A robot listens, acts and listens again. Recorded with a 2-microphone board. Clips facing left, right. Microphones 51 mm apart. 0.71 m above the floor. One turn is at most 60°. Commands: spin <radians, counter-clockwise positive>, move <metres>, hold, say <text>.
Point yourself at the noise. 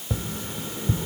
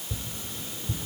spin 0.87
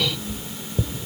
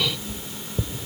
say Found it: tapping, straight ahead, under 1 m away.